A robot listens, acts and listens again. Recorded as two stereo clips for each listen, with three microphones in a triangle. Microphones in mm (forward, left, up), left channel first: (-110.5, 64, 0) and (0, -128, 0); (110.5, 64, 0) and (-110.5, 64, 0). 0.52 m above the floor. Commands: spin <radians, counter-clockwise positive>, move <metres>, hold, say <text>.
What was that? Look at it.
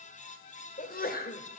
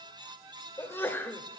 spin 1.40
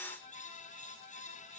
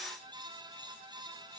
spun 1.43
say I heard a sneeze from this way, but can't make it out now.